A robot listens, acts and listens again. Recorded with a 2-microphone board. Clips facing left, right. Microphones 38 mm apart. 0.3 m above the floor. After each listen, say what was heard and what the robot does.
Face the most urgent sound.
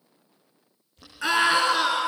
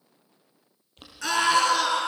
The scream: about 20° left or 160° left. Turn 20° left.
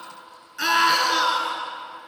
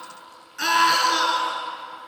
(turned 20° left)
Facing the scream, over 4 m away.